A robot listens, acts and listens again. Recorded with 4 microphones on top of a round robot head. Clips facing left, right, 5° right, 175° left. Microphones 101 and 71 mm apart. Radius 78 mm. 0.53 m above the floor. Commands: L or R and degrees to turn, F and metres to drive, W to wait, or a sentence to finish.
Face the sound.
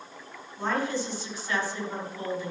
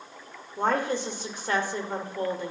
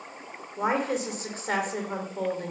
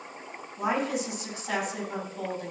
R55
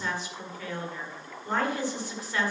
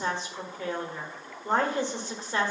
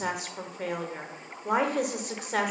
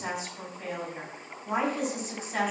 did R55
R30
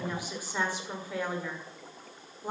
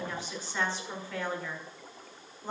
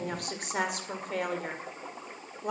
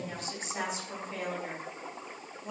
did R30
L10
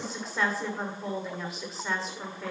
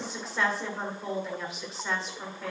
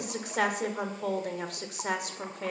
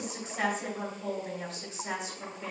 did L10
Facing the woman speaking.